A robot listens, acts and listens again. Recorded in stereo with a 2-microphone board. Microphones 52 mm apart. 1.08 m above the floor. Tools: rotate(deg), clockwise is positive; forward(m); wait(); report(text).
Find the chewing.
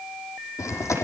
rotate(-70)
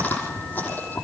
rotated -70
rotate(-40)
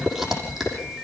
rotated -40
report("Facing the chewing, over 4 m away.")